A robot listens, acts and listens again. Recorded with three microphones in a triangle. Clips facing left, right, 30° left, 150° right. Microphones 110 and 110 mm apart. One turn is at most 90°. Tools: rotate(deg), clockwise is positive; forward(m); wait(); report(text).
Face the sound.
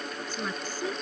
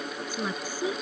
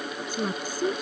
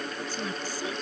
rotate(10)
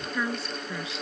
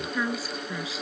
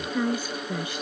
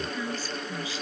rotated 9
report("Found it: a woman speaking, straight ahead.")